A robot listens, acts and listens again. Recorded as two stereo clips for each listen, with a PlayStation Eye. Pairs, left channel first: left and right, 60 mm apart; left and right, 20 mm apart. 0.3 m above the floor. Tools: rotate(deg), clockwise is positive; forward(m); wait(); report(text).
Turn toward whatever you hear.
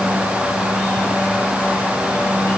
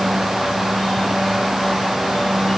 wait()
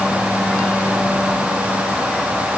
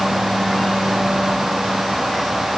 wait()
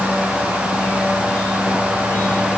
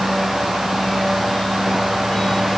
report("I can't make out anything to turn to.")